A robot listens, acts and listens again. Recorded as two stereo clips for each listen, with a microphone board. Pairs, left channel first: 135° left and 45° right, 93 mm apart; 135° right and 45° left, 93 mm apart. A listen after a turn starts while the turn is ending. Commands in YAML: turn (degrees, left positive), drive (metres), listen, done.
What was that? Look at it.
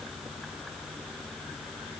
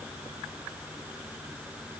listen: true
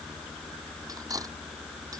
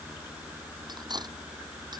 done: "Facing the cutlery clinking."